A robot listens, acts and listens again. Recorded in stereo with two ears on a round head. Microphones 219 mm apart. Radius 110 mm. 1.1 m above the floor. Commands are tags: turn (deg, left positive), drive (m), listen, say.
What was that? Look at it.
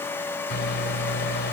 <turn deg="45"/>
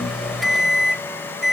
<say>Facing the microwave.</say>